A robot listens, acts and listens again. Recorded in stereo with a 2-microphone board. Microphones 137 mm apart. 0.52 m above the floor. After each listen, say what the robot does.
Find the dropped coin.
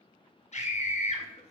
Keep listening.
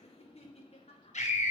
Keep listening.
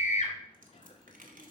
Turn 75° right.
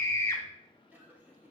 Keep listening.
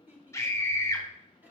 I heard a dropped coin, but can't make it out now. It was about straight ahead or 30° right.